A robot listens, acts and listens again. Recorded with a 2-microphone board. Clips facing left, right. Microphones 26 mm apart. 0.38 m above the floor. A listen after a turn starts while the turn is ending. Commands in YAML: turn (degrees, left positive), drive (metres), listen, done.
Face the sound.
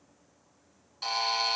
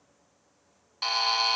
turn: -40
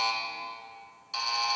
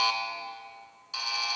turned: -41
done: "Facing the buzzer, under 1 m away."